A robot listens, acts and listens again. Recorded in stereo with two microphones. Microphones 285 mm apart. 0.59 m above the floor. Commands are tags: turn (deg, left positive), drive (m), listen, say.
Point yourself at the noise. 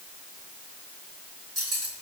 <turn deg="-70"/>
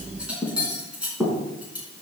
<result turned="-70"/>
<say>Found it: cutlery clinking, straight ahead, 2 to 4 m away.</say>